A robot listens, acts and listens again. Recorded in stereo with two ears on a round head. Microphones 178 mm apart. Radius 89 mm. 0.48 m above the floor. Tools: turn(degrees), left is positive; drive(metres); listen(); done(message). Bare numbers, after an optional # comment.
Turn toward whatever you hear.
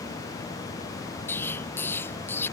turn(30)
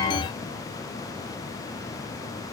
listen()
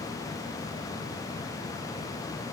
done("I heard an explosion, but can't make it out now. It was about 20° right or 140° left.")